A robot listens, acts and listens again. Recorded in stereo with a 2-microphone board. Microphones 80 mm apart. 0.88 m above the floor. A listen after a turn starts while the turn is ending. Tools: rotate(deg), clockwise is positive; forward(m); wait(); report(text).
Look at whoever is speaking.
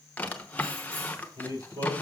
rotate(70)
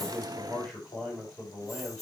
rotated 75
report("Found it: a man speaking, straight ahead.")